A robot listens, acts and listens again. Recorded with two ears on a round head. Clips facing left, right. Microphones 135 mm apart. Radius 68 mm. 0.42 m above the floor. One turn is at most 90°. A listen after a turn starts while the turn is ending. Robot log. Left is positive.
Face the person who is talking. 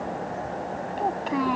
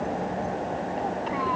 note: The child speaking: about 50° left or 130° left.
cmd yaw +50
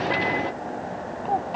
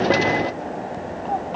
cmd idle
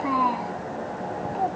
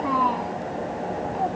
end: Found it: a child speaking, straight ahead.